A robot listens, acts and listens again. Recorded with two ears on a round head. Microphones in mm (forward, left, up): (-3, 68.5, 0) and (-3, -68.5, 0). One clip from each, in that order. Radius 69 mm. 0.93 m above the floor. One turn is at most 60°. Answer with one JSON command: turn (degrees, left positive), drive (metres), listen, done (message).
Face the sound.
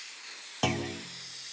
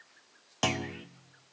{"turn": -30}
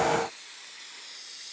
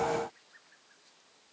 {"listen": true}
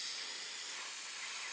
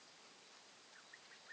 {"done": "I heard a clunk, but can't make it out now. It was about straight ahead or 120° right."}